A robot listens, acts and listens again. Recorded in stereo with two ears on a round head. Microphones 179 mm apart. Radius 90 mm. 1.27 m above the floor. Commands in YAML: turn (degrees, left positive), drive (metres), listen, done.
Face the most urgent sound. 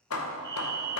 turn: -20
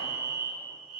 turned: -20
done: "Facing the fire alarm."